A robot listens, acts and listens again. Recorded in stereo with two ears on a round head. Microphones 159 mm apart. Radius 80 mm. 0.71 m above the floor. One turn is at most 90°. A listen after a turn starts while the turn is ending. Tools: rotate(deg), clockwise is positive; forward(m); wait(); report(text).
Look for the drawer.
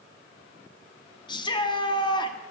wait()
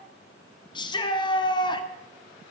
wait()
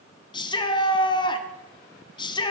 report("I can't make out a drawer to turn to.")